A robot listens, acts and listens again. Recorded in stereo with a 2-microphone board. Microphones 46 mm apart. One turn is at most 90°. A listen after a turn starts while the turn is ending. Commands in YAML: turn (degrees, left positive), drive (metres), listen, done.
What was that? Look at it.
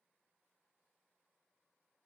listen: true
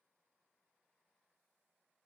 listen: true
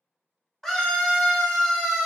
turn: 30
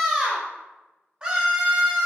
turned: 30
turn: -20
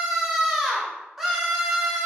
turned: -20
done: "Facing the scream, under 1 m away."